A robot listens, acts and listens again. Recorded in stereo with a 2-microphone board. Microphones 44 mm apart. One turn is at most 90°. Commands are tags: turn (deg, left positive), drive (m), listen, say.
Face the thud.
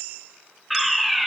<listen/>
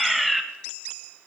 <listen/>
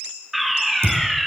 <turn deg="-70"/>
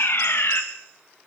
<listen/>
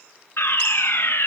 <say>I heard a thud, but can't make it out now. It was about straight ahead or 40° right.</say>